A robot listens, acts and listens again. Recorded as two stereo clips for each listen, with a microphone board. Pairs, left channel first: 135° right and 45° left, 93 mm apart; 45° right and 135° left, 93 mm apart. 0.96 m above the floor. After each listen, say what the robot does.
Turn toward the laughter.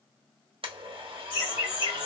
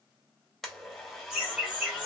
Turn 150° right.
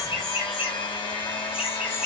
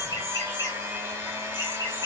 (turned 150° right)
Turn 40° right.
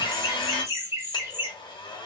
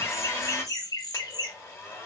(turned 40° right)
Turn 15° right.
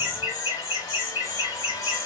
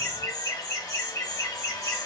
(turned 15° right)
Found it: laughter, straight ahead.